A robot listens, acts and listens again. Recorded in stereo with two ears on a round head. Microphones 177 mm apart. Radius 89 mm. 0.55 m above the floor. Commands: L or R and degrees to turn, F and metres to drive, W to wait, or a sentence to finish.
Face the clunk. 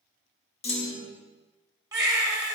L30
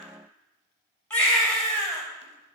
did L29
W
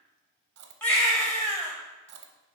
I heard a clunk, but can't make it out now. It was about 5° left or 120° left.